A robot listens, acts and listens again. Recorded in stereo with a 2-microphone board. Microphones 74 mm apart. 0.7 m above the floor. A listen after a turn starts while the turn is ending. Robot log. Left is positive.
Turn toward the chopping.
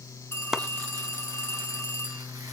cmd yaw -30
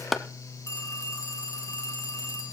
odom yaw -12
end: Facing the chopping.